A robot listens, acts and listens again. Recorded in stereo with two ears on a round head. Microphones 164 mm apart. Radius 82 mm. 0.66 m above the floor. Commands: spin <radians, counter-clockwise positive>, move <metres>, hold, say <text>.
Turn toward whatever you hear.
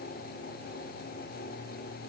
hold
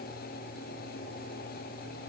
hold
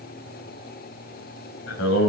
spin 1.57
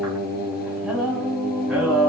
say Facing the singing.